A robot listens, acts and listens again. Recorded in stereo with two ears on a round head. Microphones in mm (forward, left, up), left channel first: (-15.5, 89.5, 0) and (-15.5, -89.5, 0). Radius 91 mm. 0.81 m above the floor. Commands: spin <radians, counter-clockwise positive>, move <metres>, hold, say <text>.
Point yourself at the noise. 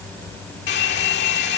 spin 1.05
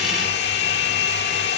spin 0.96
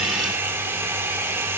spin -0.17
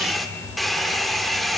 say Facing the hair dryer.